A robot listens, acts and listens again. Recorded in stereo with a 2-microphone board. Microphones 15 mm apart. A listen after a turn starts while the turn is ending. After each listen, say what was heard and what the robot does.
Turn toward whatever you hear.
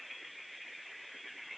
Keep listening.
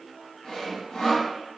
The sawing: about 60° left or 120° left. Turn 60° left.
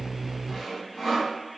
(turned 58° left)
Facing the sawing.